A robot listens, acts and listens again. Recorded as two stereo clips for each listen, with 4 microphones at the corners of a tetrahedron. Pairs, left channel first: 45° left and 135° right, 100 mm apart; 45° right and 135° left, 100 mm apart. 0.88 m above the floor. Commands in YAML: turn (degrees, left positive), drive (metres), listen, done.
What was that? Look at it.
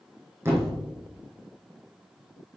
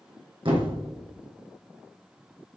turn: 165
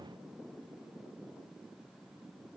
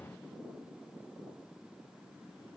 done: "Facing where the thud came from. I can't hear it now."